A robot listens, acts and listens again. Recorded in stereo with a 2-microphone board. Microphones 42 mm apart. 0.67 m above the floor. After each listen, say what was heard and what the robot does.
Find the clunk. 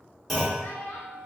Turn 30° left.
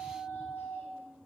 Keep listening.
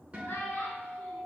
I heard a clunk, but can't make it out now. It was about 25° right or 145° left.